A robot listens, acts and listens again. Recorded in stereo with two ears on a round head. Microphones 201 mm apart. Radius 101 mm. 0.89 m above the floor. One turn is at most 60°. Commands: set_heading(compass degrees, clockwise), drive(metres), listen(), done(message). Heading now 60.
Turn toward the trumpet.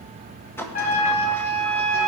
set_heading(25)
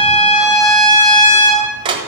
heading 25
set_heading(325)
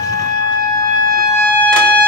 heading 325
set_heading(265)
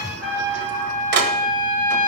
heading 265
done("Facing the trumpet.")